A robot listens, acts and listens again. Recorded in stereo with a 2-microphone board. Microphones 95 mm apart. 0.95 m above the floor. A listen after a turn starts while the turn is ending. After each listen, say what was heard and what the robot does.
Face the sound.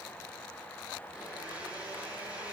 The blender: about 15° right or 165° right. Turn 15° right.
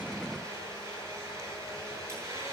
So it is at 145° right. Turn 145° right.
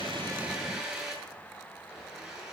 Facing the blender, over 4 m away.